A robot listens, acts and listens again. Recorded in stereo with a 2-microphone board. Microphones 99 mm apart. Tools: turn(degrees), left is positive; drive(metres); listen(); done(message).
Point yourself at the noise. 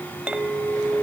turn(degrees=-30)
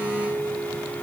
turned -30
turn(degrees=-135)
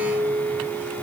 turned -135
turn(degrees=-45)
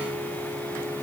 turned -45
listen()
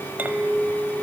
turn(degrees=-20)
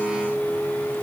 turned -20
done("Found it: a clink, straight ahead, 1 to 2 m away.")